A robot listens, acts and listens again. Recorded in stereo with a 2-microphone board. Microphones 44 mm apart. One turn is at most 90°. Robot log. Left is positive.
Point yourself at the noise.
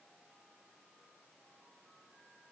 cmd idle
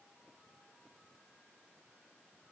cmd idle
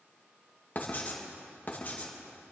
note: The writing: about 40° left or 140° left.
cmd yaw +40
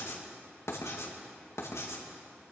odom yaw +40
note: So it is at 100° left.
cmd yaw +90
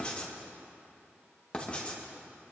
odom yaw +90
note: The writing is now 25° left.
cmd yaw +25
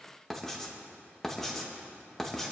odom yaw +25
end: Facing the writing, 2 to 4 m away.